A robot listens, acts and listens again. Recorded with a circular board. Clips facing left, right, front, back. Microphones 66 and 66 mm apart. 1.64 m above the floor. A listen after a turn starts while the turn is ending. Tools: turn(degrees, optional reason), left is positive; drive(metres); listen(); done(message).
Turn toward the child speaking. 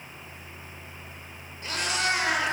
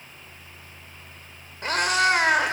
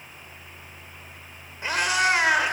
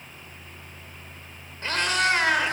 listen()
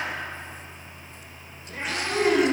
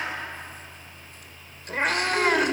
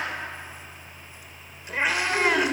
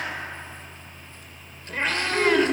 turn(degrees=80, reason="The child speaking: 80° left.")
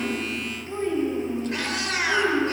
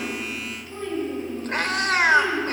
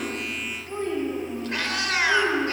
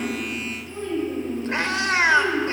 turn(degrees=35, reason="The child speaking is now 35° left.")
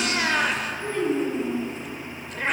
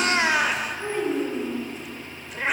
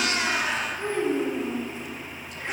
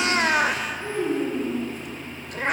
turn(degrees=-20, reason="The child speaking is now 20° right.")
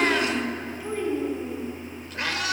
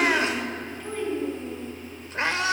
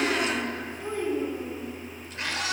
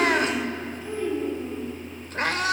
turn(degrees=10, reason="The child speaking is now 10° left.")
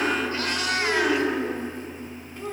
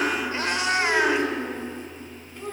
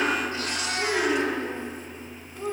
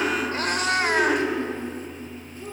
done("Found it: a child speaking, straight ahead.")